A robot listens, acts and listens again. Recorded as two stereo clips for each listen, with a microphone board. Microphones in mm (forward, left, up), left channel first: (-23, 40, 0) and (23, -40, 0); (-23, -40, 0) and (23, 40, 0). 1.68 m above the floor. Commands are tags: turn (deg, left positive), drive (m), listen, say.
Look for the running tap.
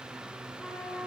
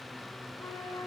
<listen/>
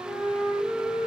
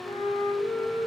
<listen/>
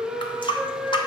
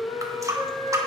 <turn deg="110"/>
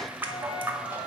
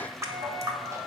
<say>Found it: a running tap, straight ahead, 1 to 2 m away.</say>